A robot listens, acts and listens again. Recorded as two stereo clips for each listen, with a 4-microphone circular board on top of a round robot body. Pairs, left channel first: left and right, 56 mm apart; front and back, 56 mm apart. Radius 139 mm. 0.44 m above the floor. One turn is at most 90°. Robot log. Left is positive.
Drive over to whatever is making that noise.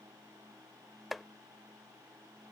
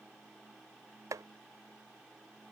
note: The chopping: straight behind.
cmd yaw +90
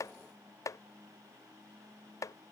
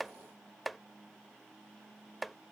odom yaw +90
note: The chopping is now 90° left.
cmd yaw +90
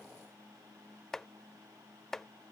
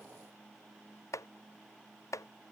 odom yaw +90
cmd fwd 1.0
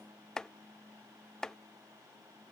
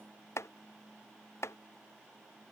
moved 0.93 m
note: The chopping is now 10° left.
cmd yaw +10
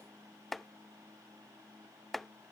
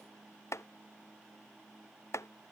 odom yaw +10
cmd fwd 1.0
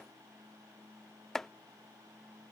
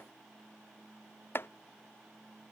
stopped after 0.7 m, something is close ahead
end: I am next to the chopping.